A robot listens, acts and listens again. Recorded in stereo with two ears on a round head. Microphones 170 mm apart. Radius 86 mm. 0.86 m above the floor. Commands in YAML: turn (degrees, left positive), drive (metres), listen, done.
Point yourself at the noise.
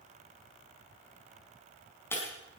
turn: 30
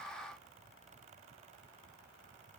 listen: true
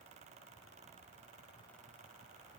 done: "I heard breaking glass, but can't make it out now. It was about 15° right or 135° left."